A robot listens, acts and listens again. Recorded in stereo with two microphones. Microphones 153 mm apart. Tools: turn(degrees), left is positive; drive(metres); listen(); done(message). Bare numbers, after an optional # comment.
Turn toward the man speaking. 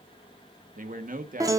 # The man speaking: about 65° right or 115° right.
turn(-65)
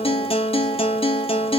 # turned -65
listen()
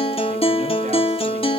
listen()
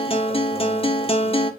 done("I heard a man speaking, but can't make it out now. It was about straight ahead or 50° right.")